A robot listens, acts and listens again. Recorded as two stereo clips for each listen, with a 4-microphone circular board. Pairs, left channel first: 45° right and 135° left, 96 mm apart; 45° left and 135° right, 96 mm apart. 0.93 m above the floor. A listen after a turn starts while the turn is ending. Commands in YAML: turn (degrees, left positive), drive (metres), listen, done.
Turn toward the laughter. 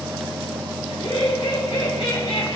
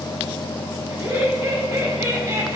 turn: -70
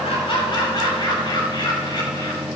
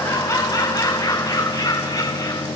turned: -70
done: "Facing the laughter, over 4 m away."